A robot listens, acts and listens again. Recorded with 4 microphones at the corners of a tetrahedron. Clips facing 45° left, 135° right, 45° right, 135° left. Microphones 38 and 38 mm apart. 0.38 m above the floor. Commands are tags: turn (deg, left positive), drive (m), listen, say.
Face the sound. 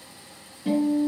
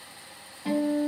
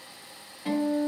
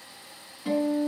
<turn deg="-110"/>
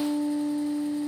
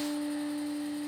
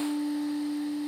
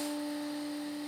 <turn deg="10"/>
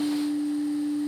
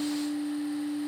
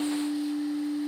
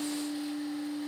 <say>Facing the guitar.</say>